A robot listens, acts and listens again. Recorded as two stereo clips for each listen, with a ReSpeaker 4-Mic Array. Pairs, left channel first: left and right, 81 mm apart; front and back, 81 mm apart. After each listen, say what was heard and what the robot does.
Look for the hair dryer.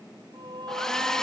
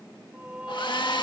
The hair dryer: 10° left. Turn 10° left.
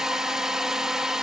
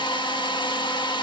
Found it: a hair dryer, straight ahead.